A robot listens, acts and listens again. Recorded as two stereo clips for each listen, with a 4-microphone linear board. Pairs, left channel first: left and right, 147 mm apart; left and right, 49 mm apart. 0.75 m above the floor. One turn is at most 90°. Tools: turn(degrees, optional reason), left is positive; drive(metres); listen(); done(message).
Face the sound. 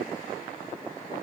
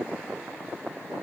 listen()
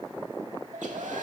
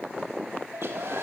turn(degrees=-55, reason="The hair dryer: about 55° right or 125° right.")
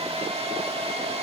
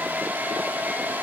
turn(degrees=-50, reason="So it is at 50° right.")
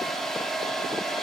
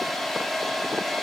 done("Found it: a hair dryer, straight ahead, 1 to 2 m away.")